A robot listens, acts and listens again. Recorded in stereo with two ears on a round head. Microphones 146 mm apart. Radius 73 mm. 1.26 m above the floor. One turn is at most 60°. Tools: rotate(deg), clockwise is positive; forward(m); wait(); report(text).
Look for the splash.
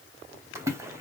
rotate(15)
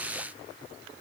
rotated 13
wait()
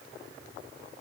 report("I heard a splash, but can't make it out now. It was about 5° right or 150° right.")